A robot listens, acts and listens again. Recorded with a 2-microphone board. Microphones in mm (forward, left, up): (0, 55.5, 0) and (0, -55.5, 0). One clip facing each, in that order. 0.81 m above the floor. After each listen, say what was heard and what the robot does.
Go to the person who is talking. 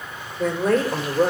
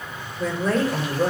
The woman speaking: about 60° left or 120° left. Turn 60° left.
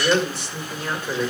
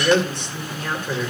Drive 1.0 m forward.
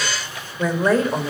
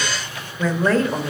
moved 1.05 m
The woman speaking is now 15° left. Turn 15° left.
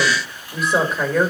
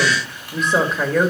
Drive 1.0 m forward.
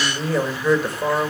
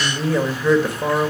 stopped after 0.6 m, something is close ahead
Arrived at the woman speaking, straight ahead.